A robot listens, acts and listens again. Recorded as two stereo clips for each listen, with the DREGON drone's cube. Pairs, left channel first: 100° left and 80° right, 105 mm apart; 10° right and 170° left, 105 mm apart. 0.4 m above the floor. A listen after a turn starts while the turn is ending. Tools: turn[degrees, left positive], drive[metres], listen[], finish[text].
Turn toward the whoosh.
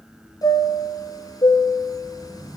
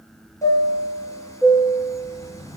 Thought: The whoosh: 25° right.
Action: turn[-25]
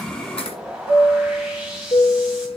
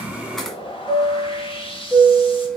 Action: finish[Found it: a whoosh, straight ahead.]